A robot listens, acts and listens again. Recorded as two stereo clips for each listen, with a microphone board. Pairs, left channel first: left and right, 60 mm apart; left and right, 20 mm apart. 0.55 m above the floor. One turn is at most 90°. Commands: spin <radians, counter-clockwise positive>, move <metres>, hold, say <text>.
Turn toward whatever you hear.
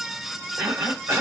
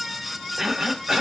spin -0.70
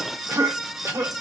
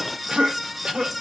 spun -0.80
spin -1.40
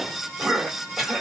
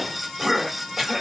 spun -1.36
say Facing the cough, 1 to 2 m away.